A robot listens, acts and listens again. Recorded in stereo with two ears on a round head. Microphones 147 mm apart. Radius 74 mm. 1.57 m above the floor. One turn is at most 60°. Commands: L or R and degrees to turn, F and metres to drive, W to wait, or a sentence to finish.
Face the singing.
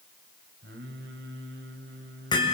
R60
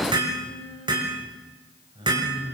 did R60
R30
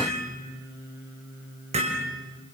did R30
R20
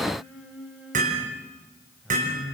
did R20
Facing the singing, 2 to 4 m away.